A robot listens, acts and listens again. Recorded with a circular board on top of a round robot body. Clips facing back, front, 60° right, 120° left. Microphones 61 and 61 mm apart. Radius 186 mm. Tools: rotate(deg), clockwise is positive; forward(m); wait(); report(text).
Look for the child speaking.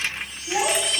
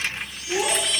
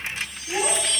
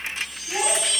rotate(150)
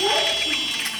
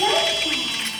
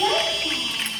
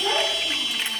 rotate(50)
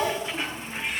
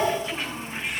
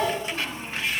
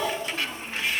report("Found it: a child speaking, straight ahead, over 4 m away.")